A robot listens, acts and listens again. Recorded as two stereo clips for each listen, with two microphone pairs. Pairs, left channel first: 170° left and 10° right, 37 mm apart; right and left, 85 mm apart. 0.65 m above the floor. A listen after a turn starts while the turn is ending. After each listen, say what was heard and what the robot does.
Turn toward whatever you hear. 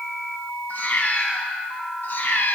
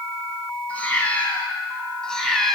The cat meowing: straight behind. Turn 180° left.
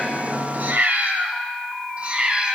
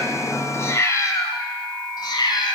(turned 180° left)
The cat meowing is now 70° right. Turn 70° right.
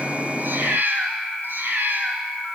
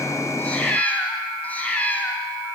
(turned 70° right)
The cat meowing is now 20° right. Turn 20° right.
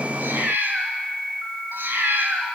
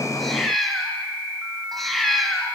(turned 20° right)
Found it: a cat meowing, straight ahead.